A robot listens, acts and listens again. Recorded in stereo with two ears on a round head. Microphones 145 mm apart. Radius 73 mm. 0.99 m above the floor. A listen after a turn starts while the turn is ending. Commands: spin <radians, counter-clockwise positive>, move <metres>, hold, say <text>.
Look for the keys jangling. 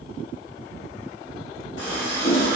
hold
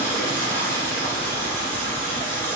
hold
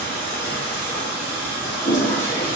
say I can't make out keys jangling, only a running tap and a toilet flushing.